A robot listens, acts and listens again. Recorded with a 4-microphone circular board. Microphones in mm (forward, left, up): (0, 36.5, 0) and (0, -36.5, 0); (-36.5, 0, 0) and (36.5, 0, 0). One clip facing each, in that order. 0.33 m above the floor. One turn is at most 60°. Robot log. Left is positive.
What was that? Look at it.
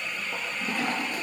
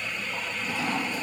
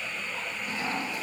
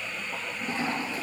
note: The toilet flushing: 55° left.
cmd yaw +55
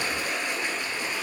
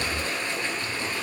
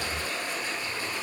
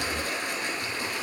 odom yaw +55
note: The toilet flushing is now 15° left.
cmd yaw +15
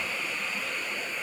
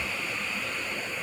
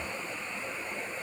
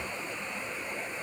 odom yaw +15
cmd idle
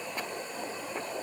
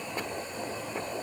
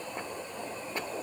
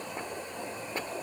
cmd idle
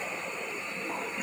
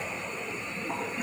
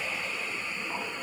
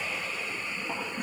end: Found it: a toilet flushing, straight ahead.